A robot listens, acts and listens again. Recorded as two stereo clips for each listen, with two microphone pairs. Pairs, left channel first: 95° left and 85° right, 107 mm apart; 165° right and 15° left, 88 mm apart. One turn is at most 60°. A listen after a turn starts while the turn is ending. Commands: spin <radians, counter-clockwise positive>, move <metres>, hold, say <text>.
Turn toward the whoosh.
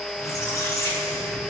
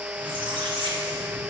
hold
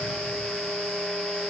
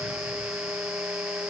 hold
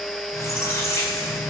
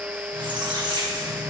say I can't make out a whoosh, only a squeak.